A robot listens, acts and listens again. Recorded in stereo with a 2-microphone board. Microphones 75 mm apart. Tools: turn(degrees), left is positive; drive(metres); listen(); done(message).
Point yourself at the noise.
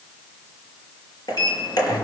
turn(degrees=60)
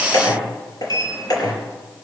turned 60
turn(degrees=60)
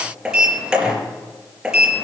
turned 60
turn(degrees=-10)
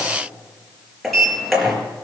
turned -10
done("Facing the sliding door.")